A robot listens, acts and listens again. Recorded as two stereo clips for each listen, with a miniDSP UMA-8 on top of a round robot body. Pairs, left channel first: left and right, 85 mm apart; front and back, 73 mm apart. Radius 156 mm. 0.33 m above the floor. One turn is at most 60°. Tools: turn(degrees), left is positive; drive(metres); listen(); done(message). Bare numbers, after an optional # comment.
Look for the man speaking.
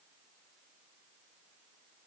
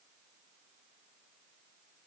listen()
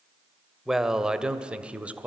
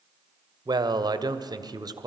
# The man speaking: 165° right.
turn(-60)
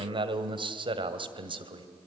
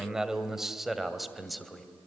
# The man speaking is now 90° right.
turn(-60)
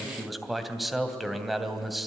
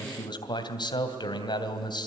done("Facing the man speaking.")